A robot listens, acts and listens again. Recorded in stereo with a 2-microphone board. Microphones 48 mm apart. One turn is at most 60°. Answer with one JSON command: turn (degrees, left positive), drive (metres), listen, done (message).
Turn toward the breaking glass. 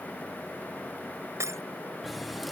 {"turn": -60}
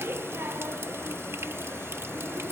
{"turn": -30}
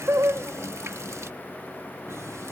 {"done": "Facing where the breaking glass came from. I can't hear it now."}